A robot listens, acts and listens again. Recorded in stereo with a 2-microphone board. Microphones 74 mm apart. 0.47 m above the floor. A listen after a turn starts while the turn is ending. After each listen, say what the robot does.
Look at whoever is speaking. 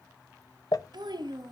Turn 90° right.
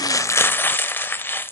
Keep listening.
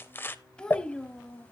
Turn 15° left.
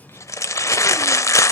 Keep listening.
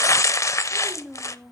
Found it: a child speaking, straight ahead.